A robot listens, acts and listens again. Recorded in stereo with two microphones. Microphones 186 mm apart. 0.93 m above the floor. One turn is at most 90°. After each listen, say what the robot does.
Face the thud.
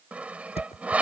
Turn 30° left.
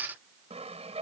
Keep listening.
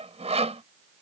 I heard a thud, but can't make it out now. It was about straight ahead or 120° left.